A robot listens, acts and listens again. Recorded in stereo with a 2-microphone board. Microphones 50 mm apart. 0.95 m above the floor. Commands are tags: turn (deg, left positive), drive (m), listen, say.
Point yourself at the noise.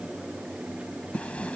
<turn deg="25"/>
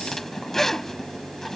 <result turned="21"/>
<turn deg="10"/>
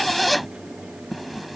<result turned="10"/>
<say>Facing the zipper.</say>